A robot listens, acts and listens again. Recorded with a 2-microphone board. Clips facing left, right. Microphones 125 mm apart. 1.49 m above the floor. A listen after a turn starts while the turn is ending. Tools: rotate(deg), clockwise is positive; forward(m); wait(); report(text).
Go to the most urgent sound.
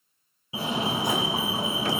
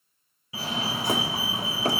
rotate(-25)
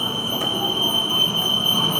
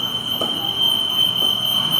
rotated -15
rotate(-140)
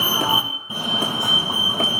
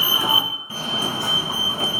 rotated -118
rotate(-20)
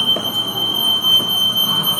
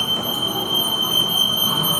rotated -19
forward(1.0)
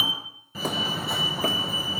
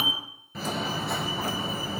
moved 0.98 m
forward(1.0)
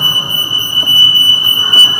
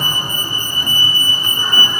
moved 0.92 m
rotate(-15)
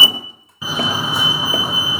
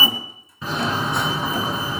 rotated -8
rotate(-10)
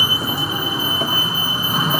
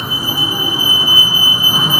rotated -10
forward(1.0)
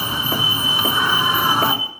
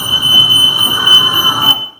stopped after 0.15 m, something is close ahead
rotate(10)
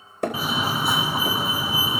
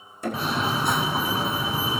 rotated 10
report("I am next to the fire alarm.")